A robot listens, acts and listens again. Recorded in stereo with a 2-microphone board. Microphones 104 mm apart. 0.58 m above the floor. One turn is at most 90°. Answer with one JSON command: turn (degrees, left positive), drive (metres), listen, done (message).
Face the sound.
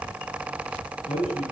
{"turn": 70}
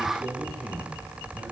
{"done": "Found it: a man speaking, straight ahead, over 4 m away."}